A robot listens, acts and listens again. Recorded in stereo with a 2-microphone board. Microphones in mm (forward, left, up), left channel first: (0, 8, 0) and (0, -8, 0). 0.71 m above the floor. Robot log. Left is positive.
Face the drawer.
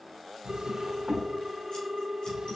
note: The drawer: about 75° right or 105° right.
cmd yaw -75
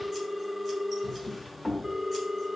end: Found it: a drawer, straight ahead, 1 to 2 m away.